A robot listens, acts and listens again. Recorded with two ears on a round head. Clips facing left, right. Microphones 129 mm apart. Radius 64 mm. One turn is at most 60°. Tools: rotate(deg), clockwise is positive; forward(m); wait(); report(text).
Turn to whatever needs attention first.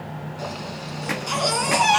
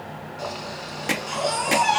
rotate(-60)
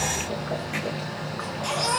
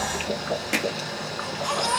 rotate(-20)
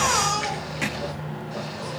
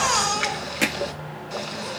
report("Found it: a baby crying, straight ahead.")